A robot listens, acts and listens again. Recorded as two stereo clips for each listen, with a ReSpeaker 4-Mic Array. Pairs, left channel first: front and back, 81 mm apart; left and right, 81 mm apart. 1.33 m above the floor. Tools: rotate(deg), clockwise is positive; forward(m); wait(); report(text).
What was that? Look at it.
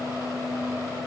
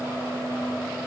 wait()
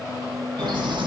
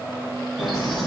rotate(-180)
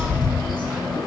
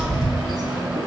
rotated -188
report("Facing the bird.")